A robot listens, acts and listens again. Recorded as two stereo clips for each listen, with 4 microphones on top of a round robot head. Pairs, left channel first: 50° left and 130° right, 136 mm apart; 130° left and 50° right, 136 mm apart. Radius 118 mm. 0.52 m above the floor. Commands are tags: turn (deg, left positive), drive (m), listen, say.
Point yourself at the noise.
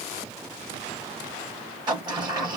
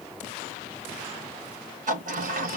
<turn deg="-70"/>
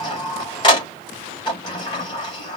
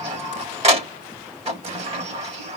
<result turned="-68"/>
<say>Facing the sliding door.</say>